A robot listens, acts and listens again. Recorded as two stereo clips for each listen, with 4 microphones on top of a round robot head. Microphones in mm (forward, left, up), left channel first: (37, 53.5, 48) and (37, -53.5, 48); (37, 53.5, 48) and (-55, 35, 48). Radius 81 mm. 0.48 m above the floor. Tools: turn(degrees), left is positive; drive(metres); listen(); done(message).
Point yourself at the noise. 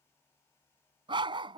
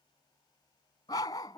turn(degrees=-50)
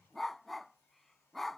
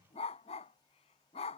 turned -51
done("Found it: a dog barking, straight ahead.")